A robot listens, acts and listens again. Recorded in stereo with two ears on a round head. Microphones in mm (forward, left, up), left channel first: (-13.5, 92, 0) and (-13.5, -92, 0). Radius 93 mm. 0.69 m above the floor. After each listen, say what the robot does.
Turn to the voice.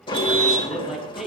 Turn 30° right.
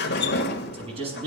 Turn 150° right.
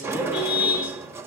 Keep listening.
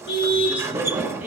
Keep listening.
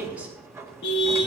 Turn 10° right.
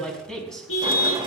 Found it: a man speaking, straight ahead, over 4 m away.